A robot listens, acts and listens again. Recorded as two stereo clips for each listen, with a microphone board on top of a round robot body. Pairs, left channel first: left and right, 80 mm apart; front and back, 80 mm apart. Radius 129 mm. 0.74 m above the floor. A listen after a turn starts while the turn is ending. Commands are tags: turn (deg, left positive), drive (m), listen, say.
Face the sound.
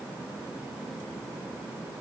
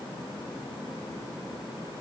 <listen/>
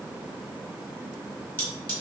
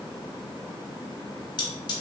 <turn deg="20"/>
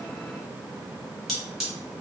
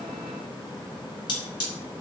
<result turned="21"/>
<say>Facing the cutlery clinking, 1 to 2 m away.</say>